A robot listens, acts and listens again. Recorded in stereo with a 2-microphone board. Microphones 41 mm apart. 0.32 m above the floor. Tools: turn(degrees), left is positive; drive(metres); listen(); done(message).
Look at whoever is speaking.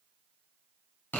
listen()
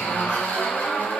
listen()
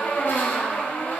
done("I can't make out anyone speaking to turn to.")